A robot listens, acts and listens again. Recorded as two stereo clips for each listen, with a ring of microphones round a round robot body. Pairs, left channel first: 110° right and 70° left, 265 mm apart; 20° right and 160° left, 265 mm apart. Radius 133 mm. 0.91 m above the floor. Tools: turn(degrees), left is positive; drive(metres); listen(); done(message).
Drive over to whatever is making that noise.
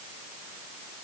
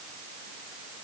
listen()
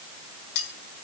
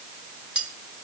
turn(degrees=-115)
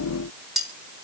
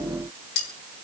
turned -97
turn(degrees=-20)
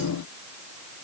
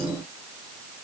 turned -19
listen()
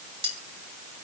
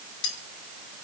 drive(metres=1.0)
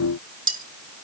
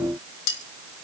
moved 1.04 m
drive(metres=1.0)
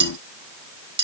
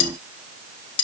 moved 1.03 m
drive(metres=1.0)
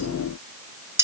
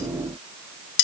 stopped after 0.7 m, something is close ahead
turn(degrees=-15)
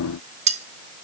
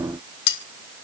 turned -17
done("I am next to the cutlery clinking.")